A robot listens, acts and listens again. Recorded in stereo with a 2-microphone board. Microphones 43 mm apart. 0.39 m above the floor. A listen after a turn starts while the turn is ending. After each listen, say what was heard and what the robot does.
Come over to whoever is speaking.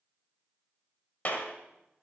Keep listening.
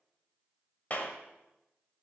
Keep listening.
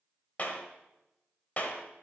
I can't make out anyone speaking, only a clap.